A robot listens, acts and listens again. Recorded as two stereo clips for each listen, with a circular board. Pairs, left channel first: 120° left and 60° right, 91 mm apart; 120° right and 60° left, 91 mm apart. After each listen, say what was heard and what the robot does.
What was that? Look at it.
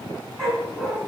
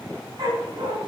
The dog barking: 30° left. Turn 30° left.
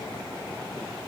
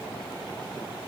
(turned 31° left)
Keep listening.
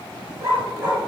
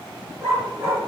Facing the dog barking, 2 to 4 m away.